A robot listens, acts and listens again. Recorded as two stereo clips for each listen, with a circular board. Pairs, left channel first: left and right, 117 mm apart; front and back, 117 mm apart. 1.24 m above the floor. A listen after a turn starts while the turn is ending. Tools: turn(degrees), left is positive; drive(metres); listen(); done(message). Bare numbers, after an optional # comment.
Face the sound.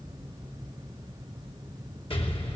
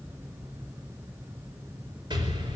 # The explosion: 130° left.
turn(130)
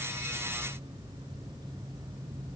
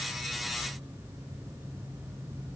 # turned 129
done("I heard an explosion from this way, but can't make it out now.")